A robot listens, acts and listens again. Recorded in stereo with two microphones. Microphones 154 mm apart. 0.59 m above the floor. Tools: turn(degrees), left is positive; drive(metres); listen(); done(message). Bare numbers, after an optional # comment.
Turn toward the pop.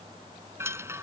listen()
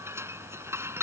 listen()
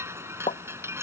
# The pop: about 50° left or 130° left.
turn(50)
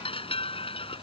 listen()
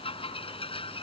done("I heard a pop, but can't make it out now. It was about straight ahead or 80° left.")